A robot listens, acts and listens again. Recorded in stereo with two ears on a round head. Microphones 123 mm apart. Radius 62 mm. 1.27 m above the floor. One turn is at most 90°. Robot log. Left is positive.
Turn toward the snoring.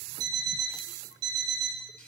cmd idle
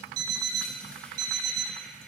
cmd idle
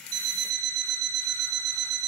end: I can't make out snoring, only an alarm clock.